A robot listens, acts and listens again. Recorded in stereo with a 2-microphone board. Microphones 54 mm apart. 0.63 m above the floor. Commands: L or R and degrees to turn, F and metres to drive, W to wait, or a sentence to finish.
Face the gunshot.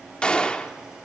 L20
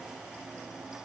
W
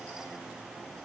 I heard a gunshot, but can't make it out now. It was about straight ahead or 140° left.